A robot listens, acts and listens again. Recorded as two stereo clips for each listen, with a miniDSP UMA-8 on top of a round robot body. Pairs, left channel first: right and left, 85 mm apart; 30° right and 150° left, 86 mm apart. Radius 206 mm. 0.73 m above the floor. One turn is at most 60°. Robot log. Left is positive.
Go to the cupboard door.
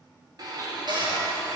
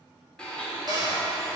note: The cupboard door: 115° left.
cmd yaw +60
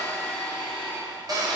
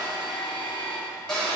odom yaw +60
note: The cupboard door is now 50° left.
cmd yaw +50
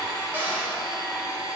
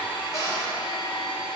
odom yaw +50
note: The cupboard door is now 20° left.
cmd yaw +20
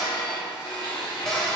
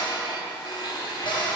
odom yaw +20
cmd fwd 1.0
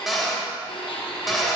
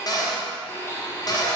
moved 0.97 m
cmd fwd 1.0
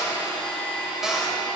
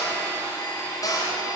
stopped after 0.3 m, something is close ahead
end: I am next to the cupboard door.